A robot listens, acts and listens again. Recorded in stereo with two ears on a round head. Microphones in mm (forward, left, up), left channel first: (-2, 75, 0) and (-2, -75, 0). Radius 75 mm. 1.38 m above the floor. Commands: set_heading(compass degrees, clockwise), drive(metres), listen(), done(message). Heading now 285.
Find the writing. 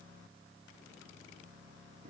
listen()
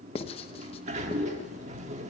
set_heading(250)
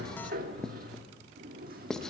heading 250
done("Found it: writing, straight ahead.")